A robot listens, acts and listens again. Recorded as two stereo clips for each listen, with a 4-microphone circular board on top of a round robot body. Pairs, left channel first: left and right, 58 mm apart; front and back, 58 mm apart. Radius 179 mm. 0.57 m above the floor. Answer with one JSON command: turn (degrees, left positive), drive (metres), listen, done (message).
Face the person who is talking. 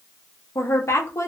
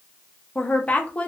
{"turn": 60}
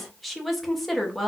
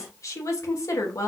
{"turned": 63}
{"done": "Facing the woman speaking."}